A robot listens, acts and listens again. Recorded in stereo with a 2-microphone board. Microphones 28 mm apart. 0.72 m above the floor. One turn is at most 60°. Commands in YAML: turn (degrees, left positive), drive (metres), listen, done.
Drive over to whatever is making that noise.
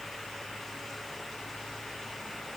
listen: true
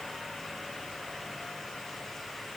listen: true
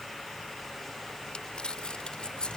turn: 35
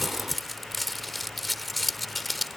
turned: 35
drive: 1.0
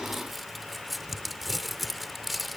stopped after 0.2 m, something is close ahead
done: "Something is in my way. I am facing the crumpling but have not reached it."